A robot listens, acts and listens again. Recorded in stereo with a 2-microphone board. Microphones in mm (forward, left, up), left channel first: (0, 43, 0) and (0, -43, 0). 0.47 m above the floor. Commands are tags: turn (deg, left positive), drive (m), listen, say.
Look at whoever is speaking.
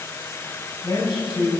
<turn deg="70"/>
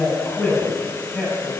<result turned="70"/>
<turn deg="10"/>
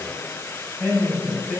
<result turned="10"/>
<say>Found it: a man speaking, straight ahead, 2 to 4 m away.</say>